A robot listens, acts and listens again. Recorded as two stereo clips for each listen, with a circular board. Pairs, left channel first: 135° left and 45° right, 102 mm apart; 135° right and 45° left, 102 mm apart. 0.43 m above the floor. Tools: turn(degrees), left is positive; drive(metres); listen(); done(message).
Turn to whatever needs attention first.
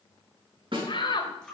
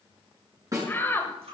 turn(degrees=160)
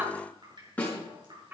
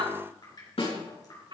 turn(degrees=20)
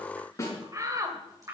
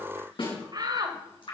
done("Found it: a shout, straight ahead, 1 to 2 m away.")